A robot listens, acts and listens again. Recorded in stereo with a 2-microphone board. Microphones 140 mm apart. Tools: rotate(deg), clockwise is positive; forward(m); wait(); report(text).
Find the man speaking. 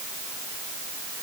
wait()
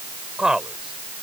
rotate(30)
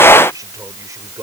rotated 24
rotate(155)
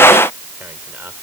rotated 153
wait()
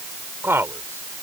rotate(20)
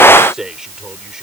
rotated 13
report("Facing the man speaking.")